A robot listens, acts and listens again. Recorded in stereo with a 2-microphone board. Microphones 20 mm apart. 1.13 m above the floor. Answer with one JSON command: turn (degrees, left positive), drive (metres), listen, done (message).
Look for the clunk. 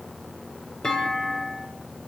{"turn": 35}
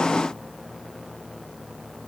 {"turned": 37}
{"listen": true}
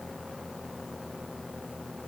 {"done": "I heard a clunk, but can't make it out now. It was about straight ahead or 105° left."}